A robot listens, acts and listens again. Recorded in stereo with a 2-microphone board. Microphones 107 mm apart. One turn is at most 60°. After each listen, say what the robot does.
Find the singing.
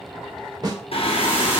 Turn 60° left.
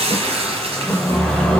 Turn 10° left.
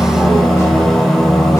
Facing the singing, under 1 m away.